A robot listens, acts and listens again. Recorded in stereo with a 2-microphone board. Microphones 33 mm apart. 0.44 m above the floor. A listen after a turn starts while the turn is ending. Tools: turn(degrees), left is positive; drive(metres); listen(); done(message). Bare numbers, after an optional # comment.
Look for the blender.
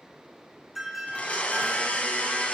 # The blender: about 40° left or 140° left.
turn(40)
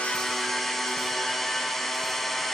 done("Found it: a blender, straight ahead.")